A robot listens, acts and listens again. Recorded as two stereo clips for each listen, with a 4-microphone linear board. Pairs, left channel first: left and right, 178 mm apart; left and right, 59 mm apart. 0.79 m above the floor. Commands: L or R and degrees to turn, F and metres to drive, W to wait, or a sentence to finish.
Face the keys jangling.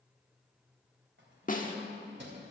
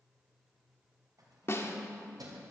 R90
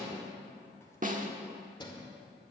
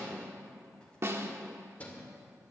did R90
L25
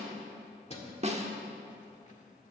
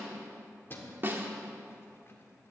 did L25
L40
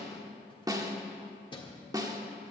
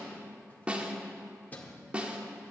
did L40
L25
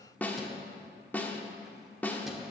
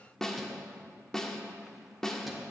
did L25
W
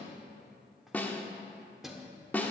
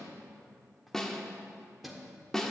Found it: keys jangling, straight ahead, 1 to 2 m away.